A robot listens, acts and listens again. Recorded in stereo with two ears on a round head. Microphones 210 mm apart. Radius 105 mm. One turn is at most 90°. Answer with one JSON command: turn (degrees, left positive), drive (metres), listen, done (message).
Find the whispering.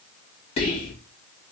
{"turn": 25}
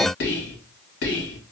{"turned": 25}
{"turn": 90}
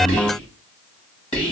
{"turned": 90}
{"turn": 20}
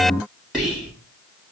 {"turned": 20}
{"done": "Found it: whispering, straight ahead, 1 to 2 m away."}